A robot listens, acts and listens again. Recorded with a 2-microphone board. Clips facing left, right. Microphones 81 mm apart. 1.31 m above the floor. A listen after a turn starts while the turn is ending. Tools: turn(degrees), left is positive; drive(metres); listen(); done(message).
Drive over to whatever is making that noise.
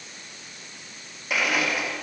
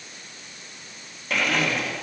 turn(degrees=30)
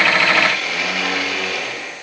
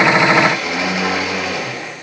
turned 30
turn(degrees=-20)
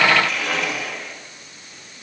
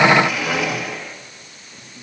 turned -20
drive(metres=1.0)
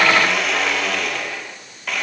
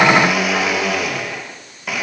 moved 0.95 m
turn(degrees=-10)
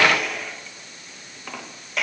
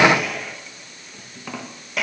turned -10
drive(metres=1.0)
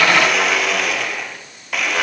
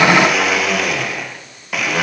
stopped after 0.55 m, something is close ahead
done("Arrived at the blender, straight ahead.")